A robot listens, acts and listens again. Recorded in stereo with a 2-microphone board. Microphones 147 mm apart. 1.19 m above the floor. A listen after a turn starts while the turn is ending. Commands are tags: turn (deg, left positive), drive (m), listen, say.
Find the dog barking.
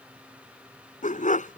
<turn deg="60"/>
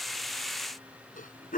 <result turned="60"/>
<turn deg="65"/>
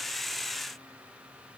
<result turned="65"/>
<listen/>
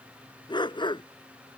<turn deg="30"/>
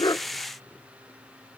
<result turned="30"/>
<listen/>
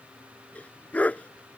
<turn deg="10"/>
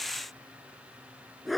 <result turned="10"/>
<say>Found it: a dog barking, straight ahead.</say>